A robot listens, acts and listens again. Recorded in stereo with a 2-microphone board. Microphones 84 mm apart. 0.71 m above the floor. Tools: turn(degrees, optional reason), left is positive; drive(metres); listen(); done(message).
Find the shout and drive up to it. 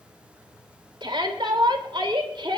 turn(degrees=-70, reason="The shout: about 70° right or 110° right.")
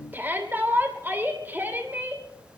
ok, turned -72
turn(degrees=-25, reason="So it is at 25° right.")
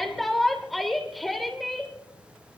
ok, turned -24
drive(metres=1.0)
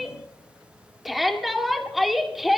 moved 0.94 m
drive(metres=1.0)
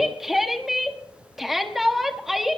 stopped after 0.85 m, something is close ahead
done("I am next to the shout.")